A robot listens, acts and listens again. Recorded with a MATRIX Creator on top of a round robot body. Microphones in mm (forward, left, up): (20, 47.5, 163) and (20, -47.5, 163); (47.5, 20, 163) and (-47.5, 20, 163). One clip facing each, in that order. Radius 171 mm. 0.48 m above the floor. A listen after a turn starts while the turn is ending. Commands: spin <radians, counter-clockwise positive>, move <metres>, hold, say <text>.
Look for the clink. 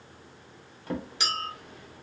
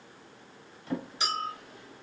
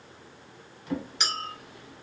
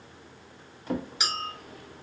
spin 1.66
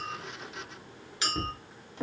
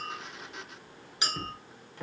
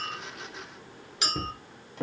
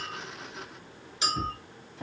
spin -0.35
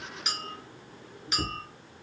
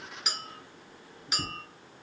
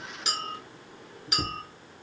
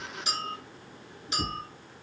say Found it: a clink, straight ahead, 1 to 2 m away.